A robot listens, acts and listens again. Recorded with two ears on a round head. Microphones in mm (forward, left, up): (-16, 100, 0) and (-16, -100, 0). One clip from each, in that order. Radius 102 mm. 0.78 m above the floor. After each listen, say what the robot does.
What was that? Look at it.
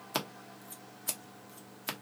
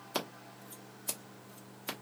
Turn 15° left.
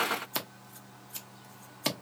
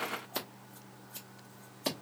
Turn 145° left.
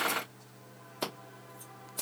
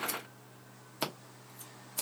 Turn 20° right.
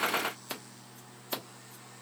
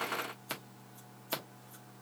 Facing the scissors.